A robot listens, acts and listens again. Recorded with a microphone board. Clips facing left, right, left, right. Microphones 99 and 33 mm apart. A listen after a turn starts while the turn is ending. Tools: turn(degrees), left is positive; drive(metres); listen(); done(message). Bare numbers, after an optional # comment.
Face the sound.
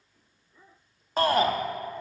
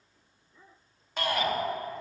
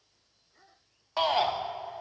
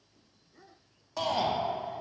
# The shout: about 40° left or 140° left.
turn(40)
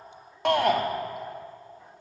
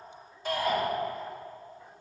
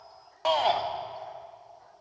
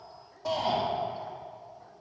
# So it is at 100° left.
turn(100)
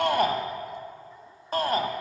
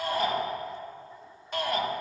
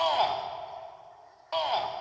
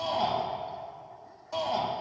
# The shout is now 40° left.
turn(40)
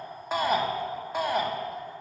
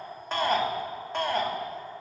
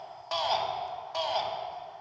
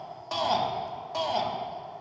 # The shout is now 10° left.
turn(10)
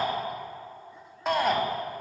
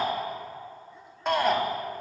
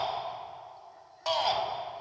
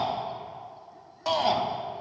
done("Found it: a shout, straight ahead, 1 to 2 m away.")